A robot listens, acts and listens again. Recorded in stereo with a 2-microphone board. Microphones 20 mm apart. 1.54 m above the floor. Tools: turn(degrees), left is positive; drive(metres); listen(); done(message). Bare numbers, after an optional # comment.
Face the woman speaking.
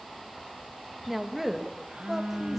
turn(-30)
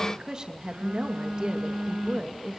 # So it is at 145° right.
turn(-145)
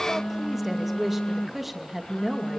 # The woman speaking is now 10° right.
turn(-10)
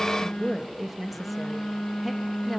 done("Found it: a woman speaking, straight ahead, 2 to 4 m away.")